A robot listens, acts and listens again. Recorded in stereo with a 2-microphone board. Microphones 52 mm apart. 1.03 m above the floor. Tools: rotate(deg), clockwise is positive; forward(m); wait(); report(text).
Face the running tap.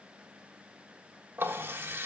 rotate(45)
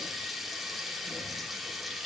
report("Facing the running tap, 1 to 2 m away.")